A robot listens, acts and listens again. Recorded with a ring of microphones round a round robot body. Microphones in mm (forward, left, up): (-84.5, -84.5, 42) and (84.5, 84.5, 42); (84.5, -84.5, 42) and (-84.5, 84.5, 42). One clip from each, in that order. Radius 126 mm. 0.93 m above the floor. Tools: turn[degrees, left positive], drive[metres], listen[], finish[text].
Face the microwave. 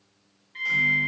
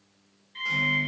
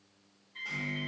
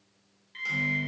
Thought: The microwave: 145° left.
Action: turn[145]
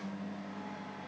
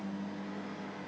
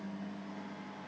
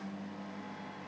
Thought: The microwave is now 55° left.
Action: turn[55]
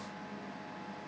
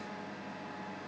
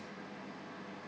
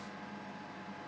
Thought: The microwave is now 20° left.
Action: turn[20]
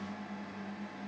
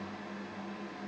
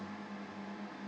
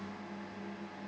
Action: finish[Found it: a microwave, straight ahead, under 1 m away.]